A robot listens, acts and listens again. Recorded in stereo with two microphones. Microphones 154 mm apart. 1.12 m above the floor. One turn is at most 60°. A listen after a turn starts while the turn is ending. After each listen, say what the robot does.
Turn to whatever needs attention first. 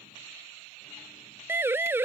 Turn 30° right.
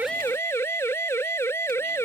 Turn 15° left.
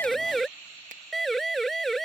Facing the siren.